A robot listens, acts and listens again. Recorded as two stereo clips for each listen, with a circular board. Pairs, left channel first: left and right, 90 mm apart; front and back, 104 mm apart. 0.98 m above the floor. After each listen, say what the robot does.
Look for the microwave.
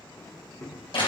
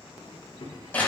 Turn 35° left.
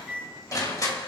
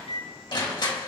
Found it: a microwave, straight ahead.